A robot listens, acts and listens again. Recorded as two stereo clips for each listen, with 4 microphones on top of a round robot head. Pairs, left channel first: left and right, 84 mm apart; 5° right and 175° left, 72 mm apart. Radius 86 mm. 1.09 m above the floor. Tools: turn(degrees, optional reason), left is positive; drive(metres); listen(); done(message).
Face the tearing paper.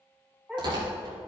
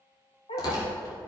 turn(degrees=-50, reason="The tearing paper: 50° right.")
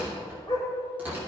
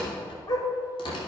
turn(degrees=-15, reason="The tearing paper is now 15° right.")
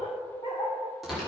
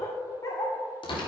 done("Facing the tearing paper, 2 to 4 m away.")